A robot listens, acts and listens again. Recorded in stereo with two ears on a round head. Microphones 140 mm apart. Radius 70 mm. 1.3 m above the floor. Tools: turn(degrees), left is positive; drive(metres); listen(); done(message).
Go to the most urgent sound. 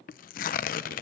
listen()
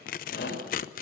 turn(degrees=75)
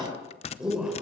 drive(metres=1.0)
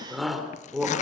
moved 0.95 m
drive(metres=1.0)
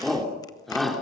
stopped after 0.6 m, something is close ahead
done("Blocked. The shout is further on, straight ahead.")